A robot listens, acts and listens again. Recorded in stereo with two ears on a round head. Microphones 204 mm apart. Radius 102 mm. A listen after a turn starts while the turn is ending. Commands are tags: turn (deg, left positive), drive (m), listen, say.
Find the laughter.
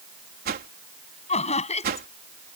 <turn deg="30"/>
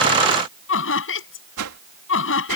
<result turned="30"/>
<turn deg="120"/>
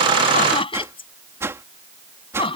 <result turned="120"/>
<turn deg="25"/>
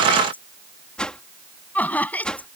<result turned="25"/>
<say>Facing the laughter.</say>